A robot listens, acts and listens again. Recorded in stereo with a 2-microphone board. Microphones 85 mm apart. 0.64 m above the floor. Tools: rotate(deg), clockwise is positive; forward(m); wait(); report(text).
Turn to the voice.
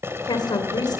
rotate(-65)
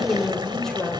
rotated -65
rotate(-10)
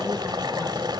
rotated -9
wait()
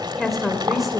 report("Found it: a woman speaking, straight ahead.")